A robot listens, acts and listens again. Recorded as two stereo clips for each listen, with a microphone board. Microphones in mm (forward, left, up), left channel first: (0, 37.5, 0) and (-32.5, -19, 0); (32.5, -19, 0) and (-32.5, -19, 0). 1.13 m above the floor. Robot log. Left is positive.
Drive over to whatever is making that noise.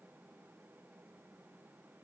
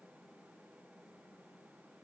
cmd idle
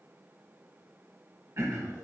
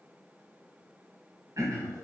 note: The throat clearing: 155° right.
cmd yaw -155
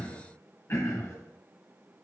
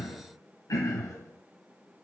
note: The throat clearing is now 20° left.
cmd yaw +20
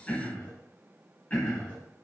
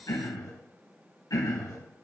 cmd fwd 1.0
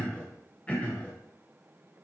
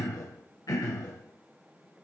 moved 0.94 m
cmd fwd 1.0
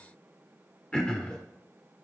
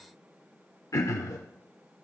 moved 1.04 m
note: The throat clearing is now 15° right.
cmd yaw -15
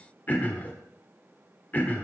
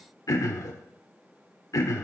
cmd fwd 1.0
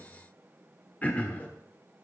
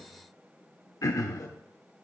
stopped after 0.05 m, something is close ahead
end: Arrived at the throat clearing, straight ahead.